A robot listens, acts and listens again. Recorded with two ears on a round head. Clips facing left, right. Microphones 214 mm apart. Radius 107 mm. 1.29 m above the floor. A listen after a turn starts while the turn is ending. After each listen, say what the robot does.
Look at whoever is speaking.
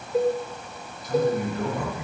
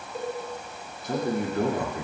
Turn 45° right.
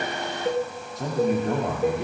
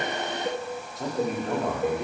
Facing the man speaking.